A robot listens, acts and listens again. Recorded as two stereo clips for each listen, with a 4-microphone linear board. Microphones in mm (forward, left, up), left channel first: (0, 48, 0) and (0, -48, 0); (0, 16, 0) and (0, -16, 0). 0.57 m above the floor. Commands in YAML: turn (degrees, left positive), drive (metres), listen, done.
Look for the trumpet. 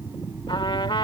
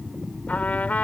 turn: 60
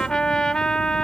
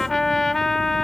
turn: 10
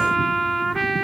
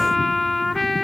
done: "Found it: a trumpet, straight ahead."